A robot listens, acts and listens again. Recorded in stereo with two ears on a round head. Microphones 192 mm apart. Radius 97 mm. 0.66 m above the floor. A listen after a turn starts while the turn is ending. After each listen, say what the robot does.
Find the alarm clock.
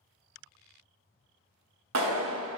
Keep listening.
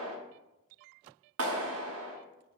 Keep listening.
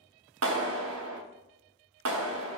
I can't make out an alarm clock, only a clap.